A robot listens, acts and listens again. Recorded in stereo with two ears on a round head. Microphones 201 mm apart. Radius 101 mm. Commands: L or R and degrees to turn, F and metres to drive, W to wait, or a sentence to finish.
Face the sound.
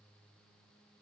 W
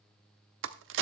R60
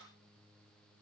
W
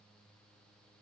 I heard a crack, but can't make it out now. It was about straight ahead or 60° right.